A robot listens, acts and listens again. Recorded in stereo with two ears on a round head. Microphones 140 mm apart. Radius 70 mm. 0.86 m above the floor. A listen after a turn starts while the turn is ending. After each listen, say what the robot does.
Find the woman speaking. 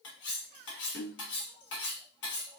Keep listening.
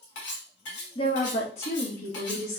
Turn 55° left.
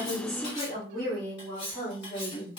Turn 25° left.
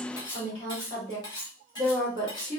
Turn 20° left.
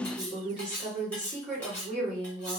Facing the woman speaking.